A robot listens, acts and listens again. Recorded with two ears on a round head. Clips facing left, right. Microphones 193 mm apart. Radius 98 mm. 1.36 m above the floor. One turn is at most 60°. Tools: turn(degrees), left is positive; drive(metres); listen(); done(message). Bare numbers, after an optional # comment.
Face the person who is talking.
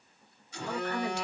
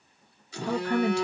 # The woman speaking: about 65° right or 115° right.
turn(-60)
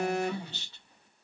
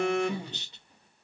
# So it is at 15° right.
turn(-15)
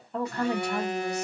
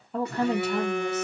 done("Facing the woman speaking.")